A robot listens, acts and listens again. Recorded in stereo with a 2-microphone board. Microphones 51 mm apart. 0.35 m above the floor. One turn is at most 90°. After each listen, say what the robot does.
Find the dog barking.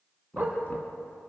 Turn 35° right.
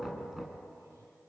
Keep listening.
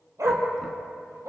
Turn 90° right.
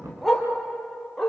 Found it: a dog barking, straight ahead.